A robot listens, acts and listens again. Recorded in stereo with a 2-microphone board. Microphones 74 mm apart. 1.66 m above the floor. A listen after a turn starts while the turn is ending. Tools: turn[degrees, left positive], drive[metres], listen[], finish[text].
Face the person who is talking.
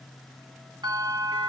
Action: listen[]
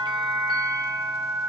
Action: listen[]
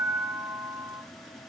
Action: finish[I can't make out anyone speaking, only a bell.]